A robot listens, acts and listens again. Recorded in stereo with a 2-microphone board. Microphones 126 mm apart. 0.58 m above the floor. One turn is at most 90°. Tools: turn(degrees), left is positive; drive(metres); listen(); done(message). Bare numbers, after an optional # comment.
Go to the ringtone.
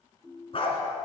turn(-30)
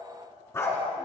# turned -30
listen()
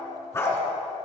listen()
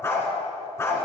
done("I heard a ringtone, but can't make it out now. It was about 25° left or 145° right. I did not reach it.")